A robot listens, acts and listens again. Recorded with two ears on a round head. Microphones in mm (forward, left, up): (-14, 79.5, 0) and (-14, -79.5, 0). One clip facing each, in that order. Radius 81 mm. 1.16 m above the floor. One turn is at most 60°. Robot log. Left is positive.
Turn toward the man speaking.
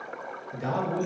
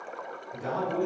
cmd yaw +60
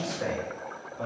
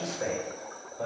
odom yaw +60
note: So it is at 30° left.
cmd yaw +30
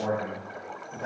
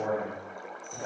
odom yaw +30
note: The man speaking is now 10° right.
cmd yaw -10
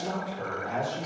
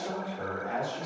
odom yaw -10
end: Facing the man speaking.